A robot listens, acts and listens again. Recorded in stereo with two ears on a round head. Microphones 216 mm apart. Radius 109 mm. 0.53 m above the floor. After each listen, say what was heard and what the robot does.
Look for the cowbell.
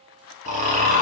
Keep listening.
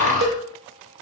The cowbell: about 55° right or 125° right. Turn 55° right.
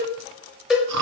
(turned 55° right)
Facing the cowbell.